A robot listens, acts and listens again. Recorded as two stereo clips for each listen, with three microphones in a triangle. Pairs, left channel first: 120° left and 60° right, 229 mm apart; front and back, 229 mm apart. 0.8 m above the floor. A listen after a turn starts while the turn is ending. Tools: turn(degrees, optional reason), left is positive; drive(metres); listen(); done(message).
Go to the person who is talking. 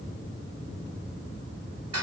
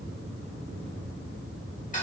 listen()
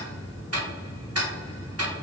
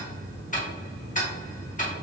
listen()
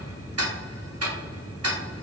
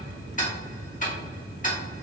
done("I can't make out anyone speaking, only ticking.")